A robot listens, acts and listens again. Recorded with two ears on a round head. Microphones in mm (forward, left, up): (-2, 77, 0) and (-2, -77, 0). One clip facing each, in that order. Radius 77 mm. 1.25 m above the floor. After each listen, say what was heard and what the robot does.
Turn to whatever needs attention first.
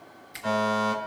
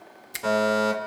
Turn 90° right.
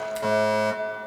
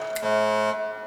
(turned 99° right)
So it is at 20° left. Turn 20° left.
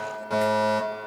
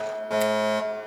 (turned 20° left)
Found it: a fire alarm, straight ahead.